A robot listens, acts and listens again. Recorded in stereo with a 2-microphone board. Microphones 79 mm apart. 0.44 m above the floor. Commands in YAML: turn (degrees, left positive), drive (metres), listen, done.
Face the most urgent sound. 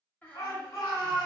turn: 55
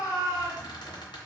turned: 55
turn: 55
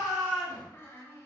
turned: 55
turn: -15
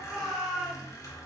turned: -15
done: "Facing the shout."